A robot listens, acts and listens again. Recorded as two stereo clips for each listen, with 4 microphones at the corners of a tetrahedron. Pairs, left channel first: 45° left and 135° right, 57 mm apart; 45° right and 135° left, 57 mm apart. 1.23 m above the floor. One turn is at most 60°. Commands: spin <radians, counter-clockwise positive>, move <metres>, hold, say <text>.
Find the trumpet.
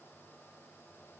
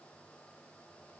hold
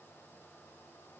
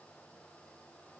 hold
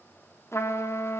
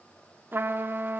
spin 1.05
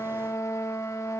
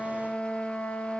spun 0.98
spin 0.44
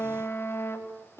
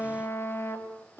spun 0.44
say Found it: a trumpet, straight ahead, 2 to 4 m away.